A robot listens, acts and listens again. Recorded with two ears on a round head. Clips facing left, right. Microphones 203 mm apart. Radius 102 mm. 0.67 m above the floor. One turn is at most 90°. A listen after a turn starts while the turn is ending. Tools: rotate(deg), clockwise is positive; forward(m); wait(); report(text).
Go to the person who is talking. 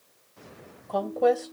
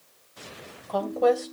rotate(-30)
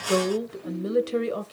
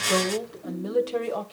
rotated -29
rotate(-90)
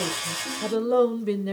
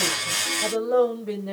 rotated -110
rotate(-40)
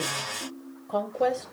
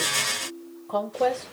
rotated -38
forward(1.0)
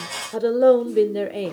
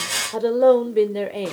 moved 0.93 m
forward(1.0)
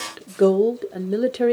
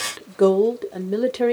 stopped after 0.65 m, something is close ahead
report("I am next to the woman speaking.")